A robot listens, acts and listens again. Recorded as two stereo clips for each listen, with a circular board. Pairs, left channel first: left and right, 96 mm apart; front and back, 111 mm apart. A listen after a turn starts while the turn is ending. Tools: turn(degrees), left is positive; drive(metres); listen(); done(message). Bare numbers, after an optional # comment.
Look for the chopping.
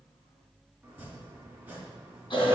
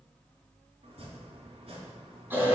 # The chopping: 165° right.
turn(-165)
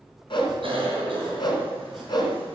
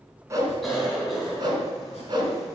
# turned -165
listen()
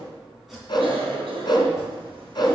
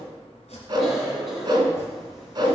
done("Facing the chopping, 2 to 4 m away.")